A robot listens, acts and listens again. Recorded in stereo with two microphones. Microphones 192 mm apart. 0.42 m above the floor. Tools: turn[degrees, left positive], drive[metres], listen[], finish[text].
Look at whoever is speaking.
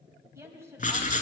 Action: turn[-30]
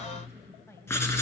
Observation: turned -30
Thought: So it is at 15° left.
Action: turn[15]
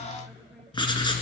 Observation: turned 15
Action: listen[]
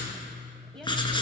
Action: finish[Found it: a woman speaking, straight ahead.]